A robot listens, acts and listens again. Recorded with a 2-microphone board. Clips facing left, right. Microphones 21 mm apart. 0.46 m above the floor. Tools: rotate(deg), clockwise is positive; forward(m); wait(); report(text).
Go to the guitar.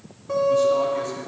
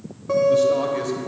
rotate(35)
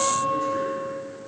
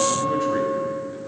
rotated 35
forward(1.0)
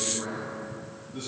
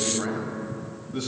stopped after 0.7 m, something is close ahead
wait()
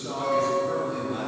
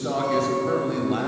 rotate(10)
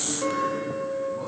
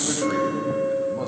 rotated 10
report("Arrived at the guitar, straight ahead.")